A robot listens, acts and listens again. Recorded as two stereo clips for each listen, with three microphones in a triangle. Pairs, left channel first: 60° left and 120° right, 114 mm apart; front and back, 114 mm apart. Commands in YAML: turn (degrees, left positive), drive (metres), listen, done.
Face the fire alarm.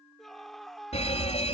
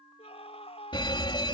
turn: 40
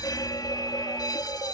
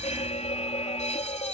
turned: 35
done: "Facing the fire alarm."